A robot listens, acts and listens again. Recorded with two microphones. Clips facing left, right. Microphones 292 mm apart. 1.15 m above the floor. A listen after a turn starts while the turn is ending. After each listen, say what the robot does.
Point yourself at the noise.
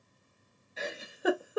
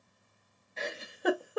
Turn 30° left.
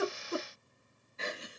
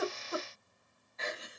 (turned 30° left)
Turn 145° left.
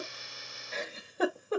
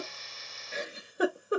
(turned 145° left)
Turn 15° right.
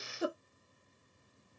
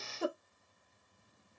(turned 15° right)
Facing the giggle, under 1 m away.